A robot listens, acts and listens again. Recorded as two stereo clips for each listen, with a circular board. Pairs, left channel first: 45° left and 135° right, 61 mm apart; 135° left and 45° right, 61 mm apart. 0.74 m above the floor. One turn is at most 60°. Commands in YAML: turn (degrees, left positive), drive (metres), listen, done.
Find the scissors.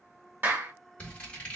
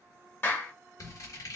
turn: 60
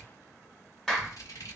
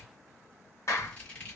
turn: 60
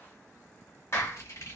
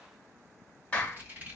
turn: 15
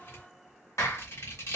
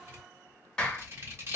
done: "Facing the scissors, 1 to 2 m away."